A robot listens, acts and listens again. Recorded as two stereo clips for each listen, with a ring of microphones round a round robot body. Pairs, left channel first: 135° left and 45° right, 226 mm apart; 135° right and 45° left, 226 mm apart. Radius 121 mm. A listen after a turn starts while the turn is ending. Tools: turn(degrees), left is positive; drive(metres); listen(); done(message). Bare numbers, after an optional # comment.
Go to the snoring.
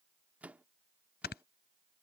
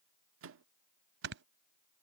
# The snoring: 85° left.
turn(85)
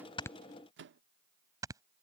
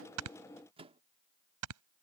# The snoring is now 30° left.
turn(30)
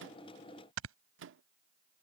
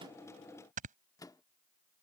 # The snoring is now 15° right.
turn(-15)
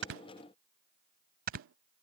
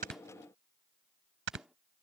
drive(1.0)
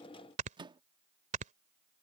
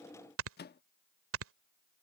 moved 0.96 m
# The snoring is now 15° left.
turn(15)
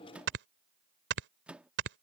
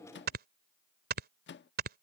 drive(1.0)
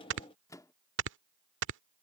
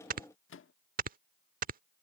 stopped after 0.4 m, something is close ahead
# The snoring is now 10° right.
turn(-10)
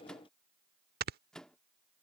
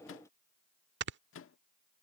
done("I am next to the snoring.")